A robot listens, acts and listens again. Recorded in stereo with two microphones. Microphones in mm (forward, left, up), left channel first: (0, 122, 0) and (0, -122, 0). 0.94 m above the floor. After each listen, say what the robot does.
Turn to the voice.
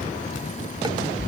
Keep listening.
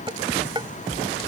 Keep listening.
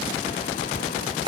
I can't make out anyone speaking, only dishes clattering.